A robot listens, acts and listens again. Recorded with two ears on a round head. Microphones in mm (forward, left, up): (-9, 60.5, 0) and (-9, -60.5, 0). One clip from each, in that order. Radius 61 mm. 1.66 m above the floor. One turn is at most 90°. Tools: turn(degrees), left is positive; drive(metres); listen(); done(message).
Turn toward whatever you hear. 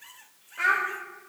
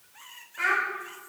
turn(degrees=30)
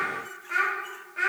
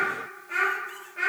turn(degrees=20)
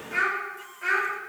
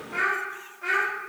turn(degrees=90)
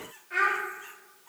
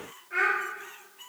turn(degrees=55)
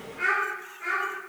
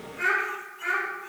done("Found it: a child speaking, straight ahead.")